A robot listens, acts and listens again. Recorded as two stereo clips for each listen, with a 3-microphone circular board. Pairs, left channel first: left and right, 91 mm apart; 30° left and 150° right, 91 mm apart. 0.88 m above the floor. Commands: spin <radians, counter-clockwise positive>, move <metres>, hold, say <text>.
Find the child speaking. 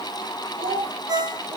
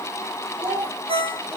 spin -1.40
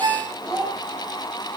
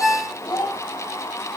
spin -0.17
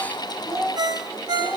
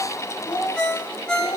spin -0.17
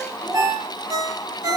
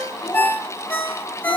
spin -0.17
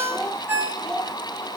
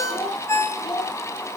say Facing the child speaking, 2 to 4 m away.